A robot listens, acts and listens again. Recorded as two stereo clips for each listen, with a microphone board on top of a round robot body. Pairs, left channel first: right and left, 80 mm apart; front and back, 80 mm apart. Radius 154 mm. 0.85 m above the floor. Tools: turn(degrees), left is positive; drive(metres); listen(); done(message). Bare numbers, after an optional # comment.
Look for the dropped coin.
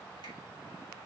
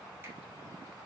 listen()
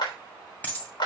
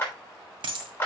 # The dropped coin: 160° right.
turn(-160)
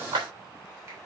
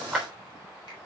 done("I heard a dropped coin from this way, but can't make it out now.")